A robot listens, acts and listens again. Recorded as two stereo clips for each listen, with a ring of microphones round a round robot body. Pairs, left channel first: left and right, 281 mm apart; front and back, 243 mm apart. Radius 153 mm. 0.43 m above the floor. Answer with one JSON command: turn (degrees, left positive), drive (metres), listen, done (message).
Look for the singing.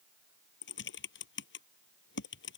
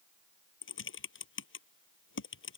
{"listen": true}
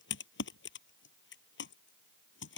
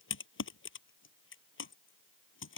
{"listen": true}
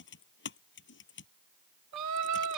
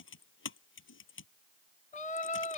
{"turn": -65}
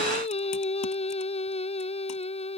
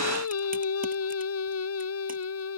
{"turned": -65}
{"turn": 20}
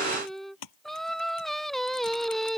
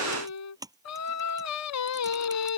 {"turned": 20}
{"done": "Found it: singing, straight ahead."}